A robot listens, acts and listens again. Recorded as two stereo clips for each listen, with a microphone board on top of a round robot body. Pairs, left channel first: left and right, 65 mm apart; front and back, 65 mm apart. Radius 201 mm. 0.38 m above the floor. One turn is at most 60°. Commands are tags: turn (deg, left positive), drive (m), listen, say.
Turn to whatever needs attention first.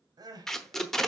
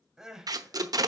<turn deg="-60"/>
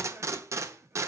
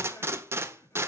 <turn deg="-35"/>
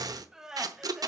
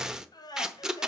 <turn deg="-10"/>
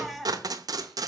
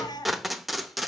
<say>Facing the crying.</say>